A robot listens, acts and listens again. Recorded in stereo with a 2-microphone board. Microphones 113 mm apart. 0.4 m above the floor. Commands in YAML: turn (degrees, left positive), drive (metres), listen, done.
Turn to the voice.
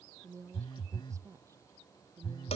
turn: -30
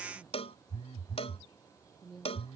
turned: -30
done: "Facing the woman speaking."